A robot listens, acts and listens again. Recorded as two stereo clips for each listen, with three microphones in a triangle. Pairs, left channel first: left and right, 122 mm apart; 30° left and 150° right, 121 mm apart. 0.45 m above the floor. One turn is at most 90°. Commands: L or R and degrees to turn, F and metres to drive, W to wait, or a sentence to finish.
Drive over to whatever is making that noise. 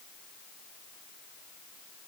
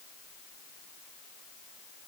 W
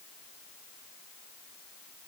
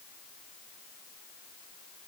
W
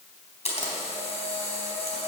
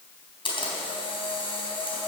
L70
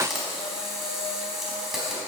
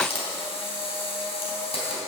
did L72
F1.0
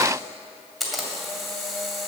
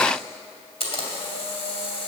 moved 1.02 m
F1.0
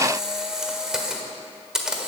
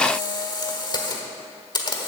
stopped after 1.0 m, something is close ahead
Arrived at the camera shutter, straight ahead.